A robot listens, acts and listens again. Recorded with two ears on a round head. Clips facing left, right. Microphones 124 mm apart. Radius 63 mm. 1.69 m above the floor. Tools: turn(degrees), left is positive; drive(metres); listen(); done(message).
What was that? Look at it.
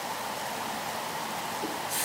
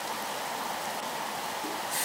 turn(degrees=50)
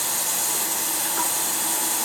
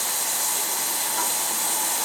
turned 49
turn(degrees=70)
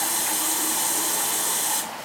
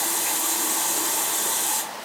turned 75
done("Found it: a running tap, straight ahead, 1 to 2 m away.")